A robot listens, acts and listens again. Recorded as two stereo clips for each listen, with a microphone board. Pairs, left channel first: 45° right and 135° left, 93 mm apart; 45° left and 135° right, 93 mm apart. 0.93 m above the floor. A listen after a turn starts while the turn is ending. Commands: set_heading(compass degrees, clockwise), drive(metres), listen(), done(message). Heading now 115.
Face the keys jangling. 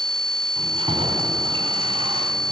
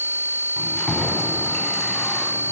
set_heading(340)
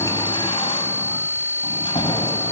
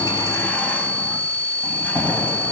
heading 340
set_heading(0)
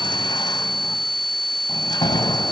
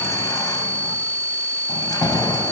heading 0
done("Found it: keys jangling, straight ahead.")